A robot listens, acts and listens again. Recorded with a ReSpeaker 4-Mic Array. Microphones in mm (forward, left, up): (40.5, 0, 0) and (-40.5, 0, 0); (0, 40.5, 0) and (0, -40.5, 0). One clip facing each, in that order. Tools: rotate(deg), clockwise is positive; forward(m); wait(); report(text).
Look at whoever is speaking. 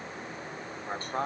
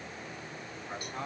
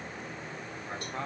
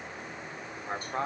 rotate(35)
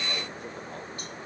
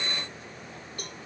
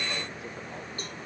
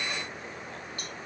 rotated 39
wait()
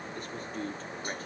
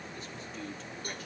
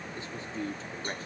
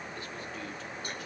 rotate(-40)
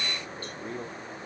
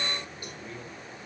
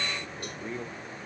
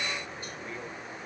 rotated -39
rotate(-35)
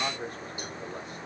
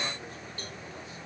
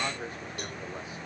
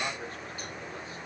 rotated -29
rotate(-20)
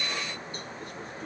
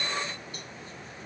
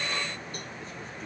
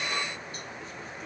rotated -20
wait()
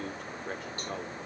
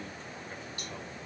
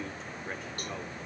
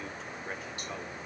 report("Found it: a man speaking, straight ahead.")